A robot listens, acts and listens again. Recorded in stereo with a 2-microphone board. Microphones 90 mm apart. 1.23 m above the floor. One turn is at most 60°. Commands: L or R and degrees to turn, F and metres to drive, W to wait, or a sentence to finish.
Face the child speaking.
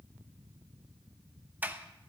W
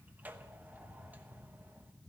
W
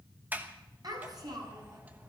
R50
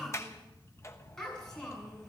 Facing the child speaking, over 4 m away.